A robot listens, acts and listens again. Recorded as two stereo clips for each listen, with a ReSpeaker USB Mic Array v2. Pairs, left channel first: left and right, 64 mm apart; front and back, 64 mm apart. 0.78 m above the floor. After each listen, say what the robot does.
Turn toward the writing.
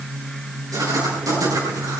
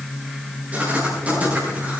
Turn 115° right.
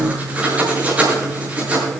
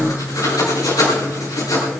Turn 20° right.
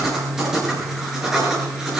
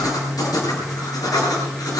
Facing the writing.